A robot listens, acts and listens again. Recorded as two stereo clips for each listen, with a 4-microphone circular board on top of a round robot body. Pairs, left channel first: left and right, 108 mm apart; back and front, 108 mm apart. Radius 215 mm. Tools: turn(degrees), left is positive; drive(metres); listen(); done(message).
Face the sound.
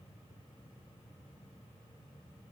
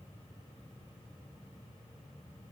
listen()
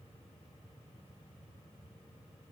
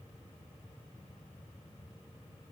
listen()
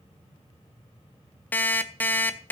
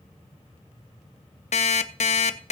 turn(degrees=165)
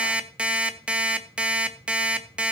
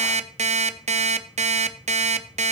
turn(degrees=-10)
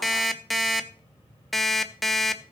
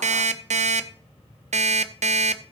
done("Found it: an alarm clock, straight ahead.")